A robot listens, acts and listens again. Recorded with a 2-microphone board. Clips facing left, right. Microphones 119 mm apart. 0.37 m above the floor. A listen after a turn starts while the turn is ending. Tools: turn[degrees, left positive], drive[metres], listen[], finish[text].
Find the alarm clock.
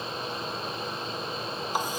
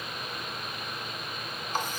Action: listen[]
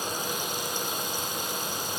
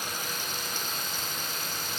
Action: listen[]
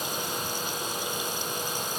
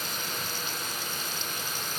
Action: finish[I can't make out an alarm clock.]